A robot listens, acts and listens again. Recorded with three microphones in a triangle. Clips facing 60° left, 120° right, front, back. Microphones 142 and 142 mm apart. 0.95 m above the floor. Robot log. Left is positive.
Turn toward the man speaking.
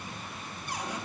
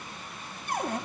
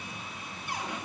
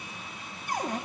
cmd idle
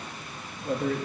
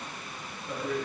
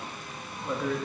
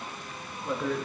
note: The man speaking: 90° left.
cmd yaw +90
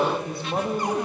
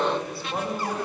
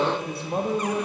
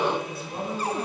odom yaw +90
note: The man speaking is now 15° right.
cmd yaw -15
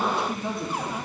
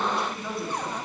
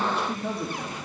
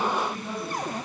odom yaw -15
note: The man speaking is now 10° right.
cmd yaw -10
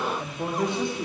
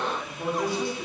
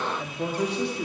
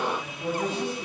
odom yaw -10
note: The man speaking is now 10° right.
cmd yaw -10
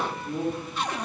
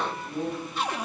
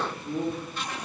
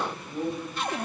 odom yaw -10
end: Found it: a man speaking, straight ahead.